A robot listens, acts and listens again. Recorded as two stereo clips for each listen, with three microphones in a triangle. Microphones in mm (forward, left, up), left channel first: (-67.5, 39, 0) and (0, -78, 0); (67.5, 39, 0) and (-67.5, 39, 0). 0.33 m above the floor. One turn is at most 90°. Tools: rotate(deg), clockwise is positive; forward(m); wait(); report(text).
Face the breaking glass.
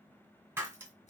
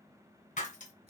rotate(-10)
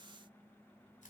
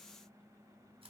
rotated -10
report("Facing where the breaking glass came from. I can't hear it now.")